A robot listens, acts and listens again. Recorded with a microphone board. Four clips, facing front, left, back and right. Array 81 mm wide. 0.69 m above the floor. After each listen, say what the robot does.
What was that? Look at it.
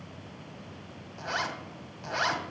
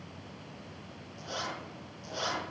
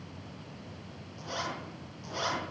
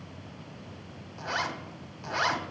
Turn 40° right.
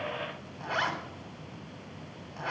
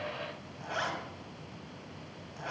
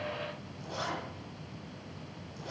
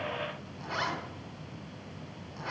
Facing the zipper, 2 to 4 m away.